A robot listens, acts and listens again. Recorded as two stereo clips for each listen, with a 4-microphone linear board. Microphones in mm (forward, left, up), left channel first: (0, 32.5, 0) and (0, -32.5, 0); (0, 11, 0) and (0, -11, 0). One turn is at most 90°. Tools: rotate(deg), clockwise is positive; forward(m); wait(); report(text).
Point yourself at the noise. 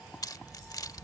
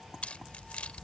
rotate(-70)
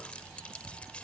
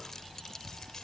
rotate(-20)
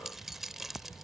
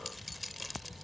report("Found it: keys jangling, straight ahead.")